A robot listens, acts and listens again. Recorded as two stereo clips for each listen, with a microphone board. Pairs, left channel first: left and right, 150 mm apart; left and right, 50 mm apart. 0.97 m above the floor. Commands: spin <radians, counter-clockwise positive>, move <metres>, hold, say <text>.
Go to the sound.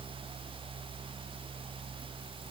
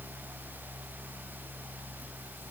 hold
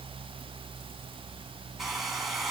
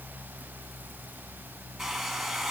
spin 0.52
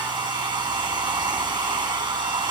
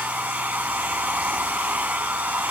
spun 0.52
spin -0.52
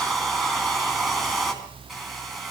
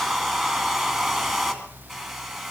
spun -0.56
move 1.0
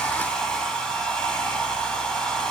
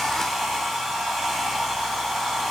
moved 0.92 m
move 1.0
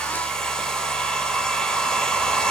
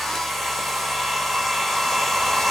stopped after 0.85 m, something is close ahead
say I am next to the hair dryer.